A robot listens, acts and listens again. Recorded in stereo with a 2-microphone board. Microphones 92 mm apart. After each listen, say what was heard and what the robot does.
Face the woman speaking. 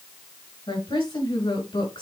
Turn 90° left.
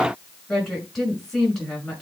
Facing the woman speaking, over 4 m away.